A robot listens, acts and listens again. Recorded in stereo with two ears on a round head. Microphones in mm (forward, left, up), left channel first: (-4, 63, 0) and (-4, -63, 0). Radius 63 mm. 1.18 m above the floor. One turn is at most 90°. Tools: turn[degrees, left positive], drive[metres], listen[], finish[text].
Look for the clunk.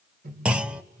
Action: turn[-30]
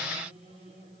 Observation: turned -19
Action: listen[]
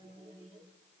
Action: finish[I heard a clunk, but can't make it out now. It was about 10° left or 155° right.]